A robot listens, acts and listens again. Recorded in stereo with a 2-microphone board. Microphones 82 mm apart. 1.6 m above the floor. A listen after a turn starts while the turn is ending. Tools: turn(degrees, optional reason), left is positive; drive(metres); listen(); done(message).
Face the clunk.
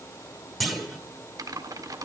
turn(degrees=30)
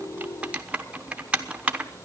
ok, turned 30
listen()
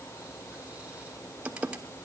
done("I heard a clunk, but can't make it out now. It was about 30° right or 150° left.")